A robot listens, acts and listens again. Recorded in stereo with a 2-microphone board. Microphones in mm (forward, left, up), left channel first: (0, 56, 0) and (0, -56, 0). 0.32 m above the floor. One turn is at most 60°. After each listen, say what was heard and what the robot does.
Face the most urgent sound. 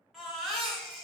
Turn 30° left.
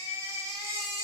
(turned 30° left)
So it is at 30° right. Turn 30° right.
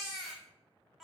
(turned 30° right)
Found it: a baby crying, straight ahead, 1 to 2 m away.